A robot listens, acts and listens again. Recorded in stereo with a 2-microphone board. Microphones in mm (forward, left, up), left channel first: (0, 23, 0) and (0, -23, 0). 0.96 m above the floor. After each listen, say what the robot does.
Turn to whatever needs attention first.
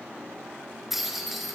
Keep listening.
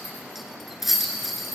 Keep listening.
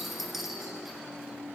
I can't make out anything urgent to turn to.